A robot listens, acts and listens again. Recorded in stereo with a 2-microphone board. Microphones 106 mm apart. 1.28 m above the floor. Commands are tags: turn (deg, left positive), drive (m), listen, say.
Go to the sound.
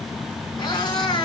<turn deg="40"/>
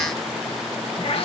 <turn deg="90"/>
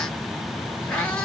<turn deg="15"/>
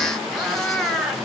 <drive m="1.0"/>
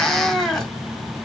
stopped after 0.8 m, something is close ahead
<say>I am next to the cat meowing.</say>